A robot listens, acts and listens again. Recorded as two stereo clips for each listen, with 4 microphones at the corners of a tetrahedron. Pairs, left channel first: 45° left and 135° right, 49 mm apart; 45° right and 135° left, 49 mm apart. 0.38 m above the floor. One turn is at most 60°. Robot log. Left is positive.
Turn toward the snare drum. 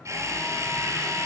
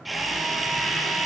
cmd idle
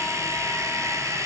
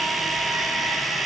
cmd idle
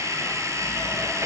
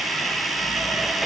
end: I can't make out a snare drum to turn to.